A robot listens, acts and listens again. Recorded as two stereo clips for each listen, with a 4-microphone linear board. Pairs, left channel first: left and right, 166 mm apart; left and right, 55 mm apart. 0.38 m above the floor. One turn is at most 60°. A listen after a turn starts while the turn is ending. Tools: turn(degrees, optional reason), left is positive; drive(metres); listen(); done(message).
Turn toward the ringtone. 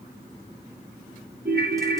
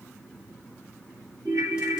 turn(degrees=-60)
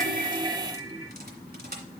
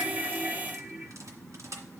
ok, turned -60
turn(degrees=-30, reason="So it is at 30° right.")
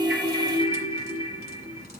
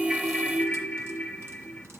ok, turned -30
turn(degrees=25, reason="The ringtone is now 25° left.")
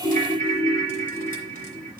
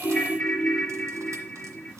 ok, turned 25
done("Found it: a ringtone, straight ahead.")